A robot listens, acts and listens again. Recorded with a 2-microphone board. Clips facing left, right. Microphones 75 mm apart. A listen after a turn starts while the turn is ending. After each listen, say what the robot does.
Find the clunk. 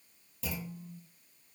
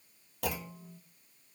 Turn 60° right.
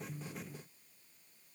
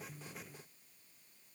Keep listening.
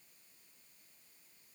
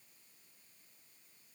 I heard a clunk, but can't make it out now. It was about straight ahead or 60° right.